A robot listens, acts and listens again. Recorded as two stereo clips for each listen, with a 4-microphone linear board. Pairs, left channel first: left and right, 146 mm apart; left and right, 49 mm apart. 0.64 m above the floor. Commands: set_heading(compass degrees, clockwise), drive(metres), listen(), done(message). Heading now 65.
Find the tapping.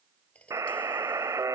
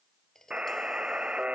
set_heading(35)
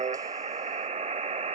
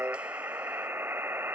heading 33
listen()
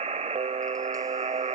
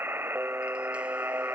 listen()
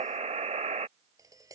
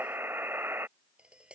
set_heading(58)
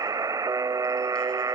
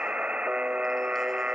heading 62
listen()
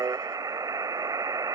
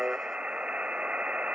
listen()
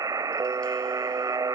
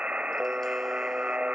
done("I heard tapping from this way, but can't make it out now.")